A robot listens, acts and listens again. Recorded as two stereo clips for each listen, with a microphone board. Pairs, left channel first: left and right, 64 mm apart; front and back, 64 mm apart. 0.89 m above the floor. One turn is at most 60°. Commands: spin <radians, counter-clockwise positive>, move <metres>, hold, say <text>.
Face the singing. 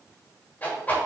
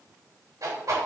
hold
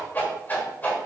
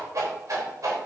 hold
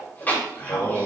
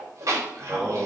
spin 1.05
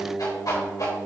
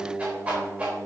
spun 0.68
spin 0.61
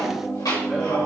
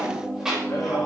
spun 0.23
spin 0.26
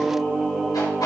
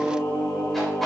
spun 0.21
spin -0.17
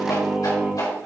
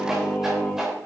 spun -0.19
say Found it: singing, straight ahead, 2 to 4 m away.